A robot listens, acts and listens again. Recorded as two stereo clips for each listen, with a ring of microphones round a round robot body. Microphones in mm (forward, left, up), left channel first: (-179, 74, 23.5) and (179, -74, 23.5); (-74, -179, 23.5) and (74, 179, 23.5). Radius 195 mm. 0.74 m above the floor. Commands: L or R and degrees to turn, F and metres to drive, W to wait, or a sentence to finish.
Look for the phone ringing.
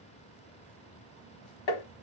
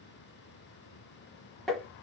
W
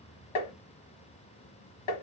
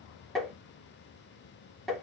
W
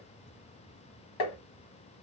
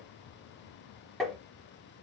I can't make out a phone ringing, only tapping.